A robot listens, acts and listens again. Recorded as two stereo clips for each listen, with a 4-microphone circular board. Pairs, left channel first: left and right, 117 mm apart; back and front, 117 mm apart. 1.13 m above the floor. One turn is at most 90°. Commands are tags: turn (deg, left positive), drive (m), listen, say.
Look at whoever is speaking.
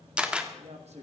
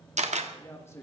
<turn deg="-90"/>
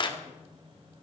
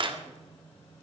<turn deg="-25"/>
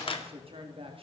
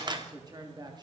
<turn deg="-55"/>
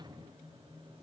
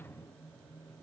<listen/>
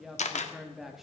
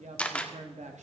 <say>Found it: a woman speaking, straight ahead, 1 to 2 m away.</say>